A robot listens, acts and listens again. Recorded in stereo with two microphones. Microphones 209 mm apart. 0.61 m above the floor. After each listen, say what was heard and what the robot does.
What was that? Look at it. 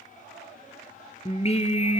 The singing: about 30° left or 150° left. Turn 30° left.
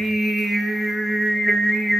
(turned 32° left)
Found it: singing, straight ahead, 2 to 4 m away.